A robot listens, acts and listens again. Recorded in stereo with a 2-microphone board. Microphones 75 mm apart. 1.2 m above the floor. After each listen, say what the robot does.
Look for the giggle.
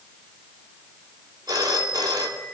Keep listening.
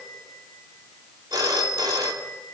Keep listening.
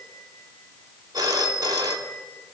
I can't make out a giggle to turn to.